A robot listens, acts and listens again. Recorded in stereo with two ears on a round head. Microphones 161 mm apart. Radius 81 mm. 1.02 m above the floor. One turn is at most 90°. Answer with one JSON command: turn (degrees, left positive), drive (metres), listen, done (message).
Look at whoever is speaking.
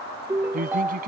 {"turn": -50}
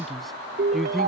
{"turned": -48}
{"done": "Facing the man speaking."}